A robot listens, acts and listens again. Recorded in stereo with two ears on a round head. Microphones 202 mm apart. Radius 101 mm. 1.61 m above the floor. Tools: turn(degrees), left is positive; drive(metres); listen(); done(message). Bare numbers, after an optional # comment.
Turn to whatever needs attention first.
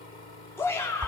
turn(30)
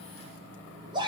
# So it is at 20° right.
turn(-20)
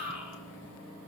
done("Facing the shout.")